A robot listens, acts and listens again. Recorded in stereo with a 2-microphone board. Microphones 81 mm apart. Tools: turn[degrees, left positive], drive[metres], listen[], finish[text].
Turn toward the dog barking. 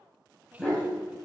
Action: turn[30]
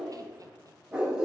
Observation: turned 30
Thought: So it is at 10° right.
Action: turn[-10]
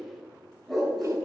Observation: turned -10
Action: finish[Found it: a dog barking, straight ahead, 2 to 4 m away.]